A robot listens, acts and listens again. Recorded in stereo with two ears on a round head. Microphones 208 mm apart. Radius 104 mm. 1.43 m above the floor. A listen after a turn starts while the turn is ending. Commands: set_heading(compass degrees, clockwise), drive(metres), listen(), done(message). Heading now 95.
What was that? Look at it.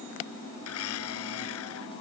set_heading(25)
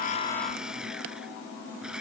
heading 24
done("Found it: a blender, straight ahead.")